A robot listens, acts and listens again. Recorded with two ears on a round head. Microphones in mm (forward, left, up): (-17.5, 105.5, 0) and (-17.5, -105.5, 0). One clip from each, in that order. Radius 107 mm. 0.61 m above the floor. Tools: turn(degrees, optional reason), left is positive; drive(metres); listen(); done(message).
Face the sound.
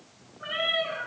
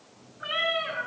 turn(degrees=-40, reason="The cat meowing: about 40° right or 140° right.")
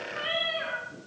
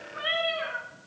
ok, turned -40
done("Found it: a cat meowing, straight ahead, 2 to 4 m away.")